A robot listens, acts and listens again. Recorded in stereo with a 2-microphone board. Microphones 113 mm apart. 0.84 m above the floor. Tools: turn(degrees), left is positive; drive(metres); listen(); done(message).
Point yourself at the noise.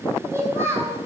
turn(degrees=-20)
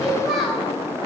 turn(degrees=30)
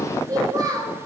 turn(degrees=-30)
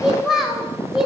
done("Found it: a child speaking, straight ahead, 2 to 4 m away.")